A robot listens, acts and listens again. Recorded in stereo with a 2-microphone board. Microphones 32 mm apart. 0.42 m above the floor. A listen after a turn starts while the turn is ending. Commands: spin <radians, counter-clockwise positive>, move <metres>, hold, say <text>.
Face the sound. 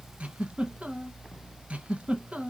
spin -0.70
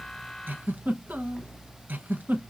spin -1.66
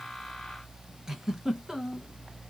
spin -0.26
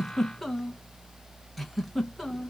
say Found it: a giggle, straight ahead.